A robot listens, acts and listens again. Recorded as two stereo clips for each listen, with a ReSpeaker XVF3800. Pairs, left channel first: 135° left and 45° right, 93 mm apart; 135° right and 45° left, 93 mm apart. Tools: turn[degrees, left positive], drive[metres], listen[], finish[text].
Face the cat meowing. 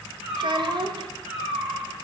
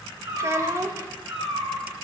Thought: The cat meowing: 30° left.
Action: turn[30]
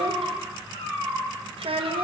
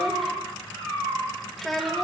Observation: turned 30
Thought: The cat meowing is now 10° left.
Action: turn[10]
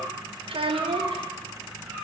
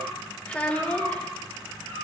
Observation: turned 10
Thought: The cat meowing is now 20° left.
Action: turn[20]
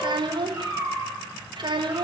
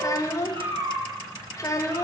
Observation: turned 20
Action: finish[Facing the cat meowing, 2 to 4 m away.]